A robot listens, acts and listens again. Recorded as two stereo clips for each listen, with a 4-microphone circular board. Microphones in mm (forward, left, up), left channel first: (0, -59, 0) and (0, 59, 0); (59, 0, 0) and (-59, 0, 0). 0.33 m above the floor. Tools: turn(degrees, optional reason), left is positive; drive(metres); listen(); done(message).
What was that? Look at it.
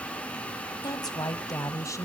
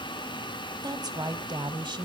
turn(degrees=-145, reason="The woman speaking: 145° right.")
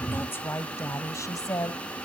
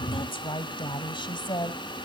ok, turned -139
turn(degrees=-40, reason="The woman speaking is now 40° right.")
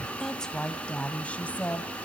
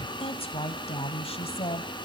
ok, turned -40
turn(degrees=-15, reason="The woman speaking is now 15° right.")
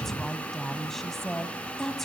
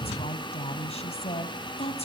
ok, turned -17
done("Found it: a woman speaking, straight ahead.")